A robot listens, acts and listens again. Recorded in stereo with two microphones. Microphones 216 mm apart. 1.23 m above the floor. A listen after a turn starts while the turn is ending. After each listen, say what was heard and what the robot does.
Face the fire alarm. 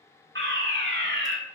The fire alarm: about 60° right or 120° right. Turn 60° right.
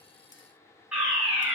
Found it: a fire alarm, straight ahead, over 4 m away.